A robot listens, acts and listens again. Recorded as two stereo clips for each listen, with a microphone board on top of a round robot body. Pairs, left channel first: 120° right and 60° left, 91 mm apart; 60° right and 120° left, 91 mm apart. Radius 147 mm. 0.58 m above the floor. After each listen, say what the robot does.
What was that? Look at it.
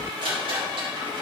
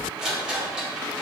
Turn 35° left.
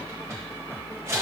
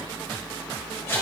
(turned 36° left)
Found it: a rattle, straight ahead.